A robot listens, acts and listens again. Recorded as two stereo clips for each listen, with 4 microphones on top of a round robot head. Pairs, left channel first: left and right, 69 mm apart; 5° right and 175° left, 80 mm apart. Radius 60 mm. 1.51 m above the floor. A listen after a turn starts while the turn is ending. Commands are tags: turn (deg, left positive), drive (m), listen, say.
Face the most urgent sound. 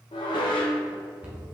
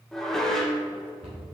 <listen/>
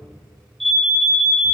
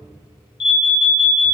<say>Facing the alarm.</say>